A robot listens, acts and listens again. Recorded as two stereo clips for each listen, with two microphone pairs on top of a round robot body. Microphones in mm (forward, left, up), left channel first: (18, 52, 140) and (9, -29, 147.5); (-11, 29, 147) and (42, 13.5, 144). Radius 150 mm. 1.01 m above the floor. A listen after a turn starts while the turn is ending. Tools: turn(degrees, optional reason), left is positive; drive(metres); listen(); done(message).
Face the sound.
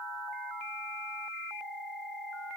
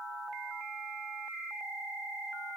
listen()
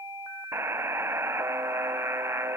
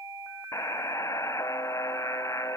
turn(degrees=-160, reason="The buzzer: 160° right.")
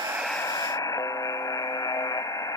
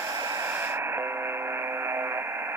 turn(degrees=35, reason="The buzzer is now 35° left.")
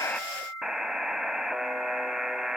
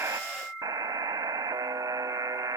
turn(degrees=-10, reason="The buzzer is now 10° right.")
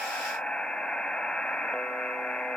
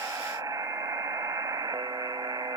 done("Facing the buzzer.")